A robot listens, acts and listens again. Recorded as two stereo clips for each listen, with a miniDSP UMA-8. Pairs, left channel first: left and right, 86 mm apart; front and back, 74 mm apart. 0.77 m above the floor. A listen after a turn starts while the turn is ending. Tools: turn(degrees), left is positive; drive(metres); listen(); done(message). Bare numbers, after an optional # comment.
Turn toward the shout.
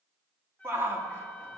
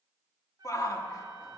# The shout: 30° right.
turn(-30)
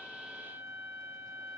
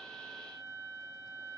listen()
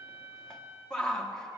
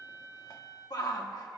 # The shout is now 10° left.
turn(10)
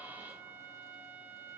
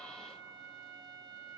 listen()
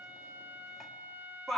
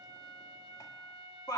done("Facing the shout.")